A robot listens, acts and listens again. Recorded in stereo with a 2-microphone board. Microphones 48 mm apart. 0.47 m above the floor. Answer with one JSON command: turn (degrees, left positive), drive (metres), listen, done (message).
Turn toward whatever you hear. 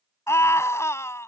{"turn": 70}
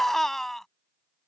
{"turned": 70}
{"turn": 10}
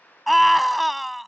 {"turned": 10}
{"done": "Facing the scream."}